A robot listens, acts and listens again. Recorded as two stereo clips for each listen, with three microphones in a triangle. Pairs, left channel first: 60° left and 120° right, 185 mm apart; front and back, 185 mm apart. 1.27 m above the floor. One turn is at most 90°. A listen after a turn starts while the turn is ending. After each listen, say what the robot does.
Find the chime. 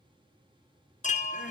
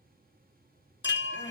Turn 10° left.
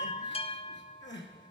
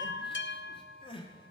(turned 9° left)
Found it: a chime, straight ahead.